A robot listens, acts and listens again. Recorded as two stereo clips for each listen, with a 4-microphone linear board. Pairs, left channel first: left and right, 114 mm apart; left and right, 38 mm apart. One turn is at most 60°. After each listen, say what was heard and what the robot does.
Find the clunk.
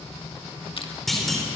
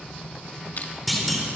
Turn 30° left.
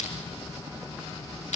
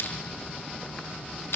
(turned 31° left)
Keep listening.
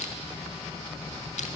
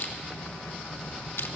I heard a clunk, but can't make it out now. It was about 30° right or 145° left.